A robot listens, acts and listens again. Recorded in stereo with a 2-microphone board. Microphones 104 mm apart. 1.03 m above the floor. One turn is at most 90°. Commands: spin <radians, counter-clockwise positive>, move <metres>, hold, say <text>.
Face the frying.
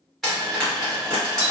spin 0.52
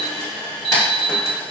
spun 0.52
hold
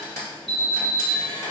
spin 1.57
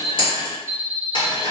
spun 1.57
spin 1.05
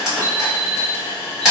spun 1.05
say Facing the frying.